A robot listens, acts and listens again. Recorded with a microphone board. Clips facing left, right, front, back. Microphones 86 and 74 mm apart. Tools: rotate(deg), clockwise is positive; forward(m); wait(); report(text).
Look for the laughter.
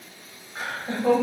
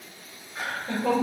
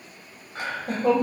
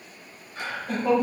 rotate(-20)
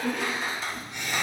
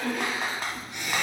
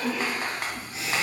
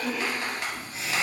rotate(15)
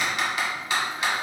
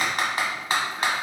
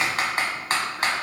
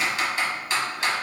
wait()
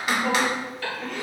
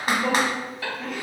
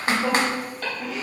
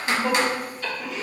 rotate(10)
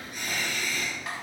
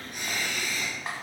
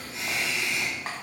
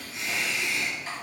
report("Facing the laughter, 2 to 4 m away.")